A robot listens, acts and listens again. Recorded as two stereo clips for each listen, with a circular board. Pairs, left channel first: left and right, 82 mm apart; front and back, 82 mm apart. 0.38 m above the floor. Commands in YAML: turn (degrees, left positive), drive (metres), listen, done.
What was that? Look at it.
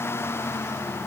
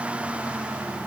listen: true
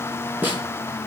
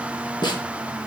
turn: -25
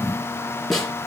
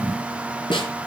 done: "Found it: a snare drum, straight ahead."